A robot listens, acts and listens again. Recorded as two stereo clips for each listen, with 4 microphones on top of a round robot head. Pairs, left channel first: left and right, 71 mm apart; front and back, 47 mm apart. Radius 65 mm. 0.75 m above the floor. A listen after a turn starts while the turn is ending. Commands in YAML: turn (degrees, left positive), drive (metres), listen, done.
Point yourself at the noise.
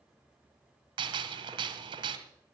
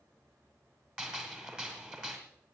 turn: -105
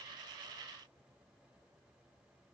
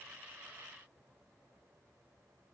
done: "Facing where the gunshot came from. I can't hear it now."